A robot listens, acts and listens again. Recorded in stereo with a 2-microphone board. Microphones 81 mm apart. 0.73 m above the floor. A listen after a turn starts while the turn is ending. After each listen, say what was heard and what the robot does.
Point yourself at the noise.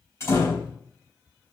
The door slam: about 35° left or 145° left. Turn 35° left.
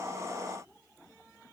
Keep listening.
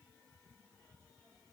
I heard a door slam, but can't make it out now. It was about straight ahead or 110° left.